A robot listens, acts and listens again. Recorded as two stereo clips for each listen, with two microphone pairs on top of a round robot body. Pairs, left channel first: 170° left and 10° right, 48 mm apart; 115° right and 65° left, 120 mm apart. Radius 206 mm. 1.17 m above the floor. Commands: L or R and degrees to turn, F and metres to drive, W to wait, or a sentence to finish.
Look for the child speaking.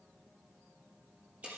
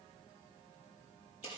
W
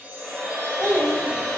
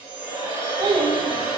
L25
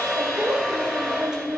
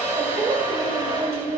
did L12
L20
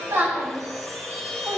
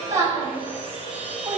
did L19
Facing the child speaking.